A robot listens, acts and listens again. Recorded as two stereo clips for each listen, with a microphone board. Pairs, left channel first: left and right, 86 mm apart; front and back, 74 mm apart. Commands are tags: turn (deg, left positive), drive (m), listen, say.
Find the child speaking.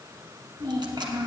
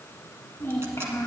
<turn deg="-55"/>
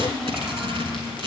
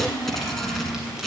<turn deg="-10"/>
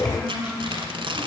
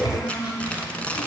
<turn deg="15"/>
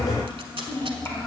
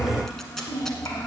<turn deg="35"/>
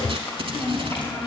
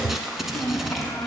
<turn deg="40"/>
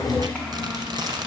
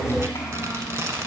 <say>Found it: a child speaking, straight ahead, 1 to 2 m away.</say>